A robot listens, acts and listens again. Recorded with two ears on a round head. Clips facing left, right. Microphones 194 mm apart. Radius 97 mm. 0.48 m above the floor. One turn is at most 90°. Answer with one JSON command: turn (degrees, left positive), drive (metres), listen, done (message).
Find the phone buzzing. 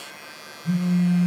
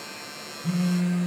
{"turn": -70}
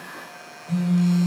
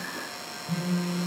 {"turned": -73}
{"turn": -15}
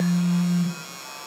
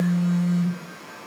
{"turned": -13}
{"done": "Facing the phone buzzing."}